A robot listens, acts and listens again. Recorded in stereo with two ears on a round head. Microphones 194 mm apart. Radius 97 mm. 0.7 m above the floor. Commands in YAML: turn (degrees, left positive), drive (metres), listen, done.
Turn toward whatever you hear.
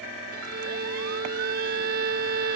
turn: -45
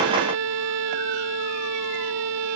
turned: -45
turn: -95
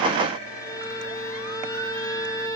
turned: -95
turn: 15
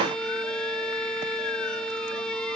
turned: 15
done: "Found it: a violin, straight ahead."